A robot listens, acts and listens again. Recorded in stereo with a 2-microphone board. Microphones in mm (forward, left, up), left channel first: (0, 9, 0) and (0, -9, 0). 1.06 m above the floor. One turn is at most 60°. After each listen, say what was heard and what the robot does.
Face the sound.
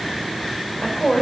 The woman speaking: about 70° left or 110° left. Turn 60° left.
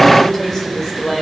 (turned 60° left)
So it is at 25° left. Turn 25° left.
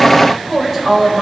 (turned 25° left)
Found it: a woman speaking, straight ahead.